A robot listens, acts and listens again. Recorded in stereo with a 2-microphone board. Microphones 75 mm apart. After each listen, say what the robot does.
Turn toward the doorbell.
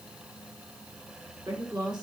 Keep listening.
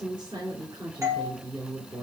Turn 40° right.
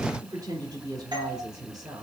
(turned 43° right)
Turn 95° right.
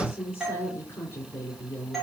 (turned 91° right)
Facing the doorbell, 2 to 4 m away.